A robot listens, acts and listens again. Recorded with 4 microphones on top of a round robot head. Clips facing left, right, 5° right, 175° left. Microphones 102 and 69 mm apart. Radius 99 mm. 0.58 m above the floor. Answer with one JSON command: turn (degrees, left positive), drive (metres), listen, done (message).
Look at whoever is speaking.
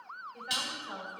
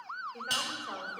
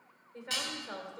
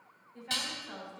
{"turn": -50}
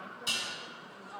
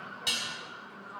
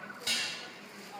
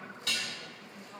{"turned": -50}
{"turn": 10}
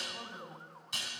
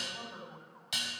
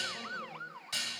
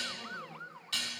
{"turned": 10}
{"listen": true}
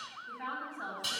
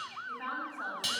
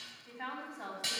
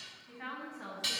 {"done": "Facing the woman speaking, over 4 m away."}